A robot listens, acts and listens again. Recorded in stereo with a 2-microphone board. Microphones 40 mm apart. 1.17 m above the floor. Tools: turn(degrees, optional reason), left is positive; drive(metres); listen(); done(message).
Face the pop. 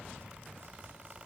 listen()
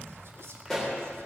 turn(degrees=30)
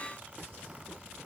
listen()
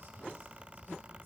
done("I heard a pop, but can't make it out now. It was about 20° right or 140° left.")